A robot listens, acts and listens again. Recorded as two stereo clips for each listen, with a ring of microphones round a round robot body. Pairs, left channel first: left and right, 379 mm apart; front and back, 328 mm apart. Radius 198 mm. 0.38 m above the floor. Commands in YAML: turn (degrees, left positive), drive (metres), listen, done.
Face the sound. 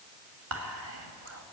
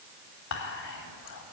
turn: -40
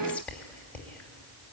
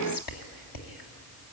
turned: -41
done: "Facing the whispering."